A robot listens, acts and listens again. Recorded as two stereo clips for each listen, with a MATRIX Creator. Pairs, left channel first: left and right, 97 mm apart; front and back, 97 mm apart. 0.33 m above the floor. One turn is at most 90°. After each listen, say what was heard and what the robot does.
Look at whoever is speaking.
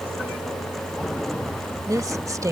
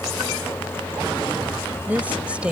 The woman speaking: 110° right. Turn 90° right.
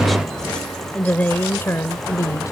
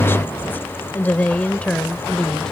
The woman speaking is now 75° left. Turn 75° left.
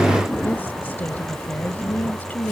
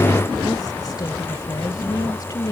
The woman speaking is now 25° left. Turn 25° left.
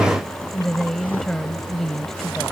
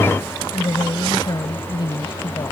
Facing the woman speaking.